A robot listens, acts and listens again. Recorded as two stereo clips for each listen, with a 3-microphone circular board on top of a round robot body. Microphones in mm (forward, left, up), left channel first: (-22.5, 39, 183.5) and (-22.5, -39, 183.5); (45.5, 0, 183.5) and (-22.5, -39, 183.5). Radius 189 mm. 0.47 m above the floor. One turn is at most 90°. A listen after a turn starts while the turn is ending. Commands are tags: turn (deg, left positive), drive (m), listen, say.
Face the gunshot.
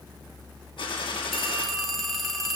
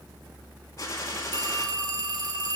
<turn deg="85"/>
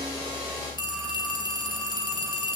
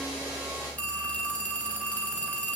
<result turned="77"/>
<say>I heard a gunshot from this way, but can't make it out now.</say>